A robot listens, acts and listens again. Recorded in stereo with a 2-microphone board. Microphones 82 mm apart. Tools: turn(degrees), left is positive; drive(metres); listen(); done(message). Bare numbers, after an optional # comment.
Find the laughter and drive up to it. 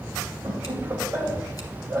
# The laughter: about 35° right or 145° right.
turn(-35)
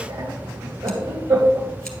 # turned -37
# So it is at 110° right.
turn(-110)
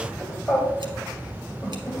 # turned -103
drive(1.0)
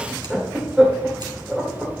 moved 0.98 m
# The laughter is now 10° right.
turn(-10)
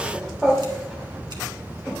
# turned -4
drive(1.0)
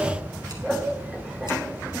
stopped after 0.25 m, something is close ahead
done("I am next to the laughter.")